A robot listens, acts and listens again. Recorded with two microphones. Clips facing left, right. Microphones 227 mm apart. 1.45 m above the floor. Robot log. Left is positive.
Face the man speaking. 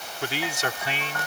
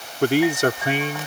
note: The man speaking: about 50° right or 130° right.
cmd yaw -50
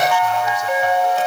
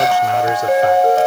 cmd idle
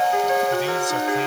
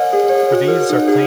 cmd idle
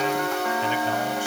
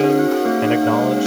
end: I heard a man speaking, but can't make it out now. It was about straight ahead or 80° right.